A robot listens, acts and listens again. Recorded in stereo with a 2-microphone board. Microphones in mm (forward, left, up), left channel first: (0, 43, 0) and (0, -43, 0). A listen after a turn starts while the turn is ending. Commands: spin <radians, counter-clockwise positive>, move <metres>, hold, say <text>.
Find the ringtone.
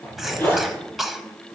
hold
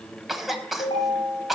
spin 1.57
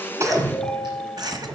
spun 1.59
say Found it: a ringtone, straight ahead, over 4 m away.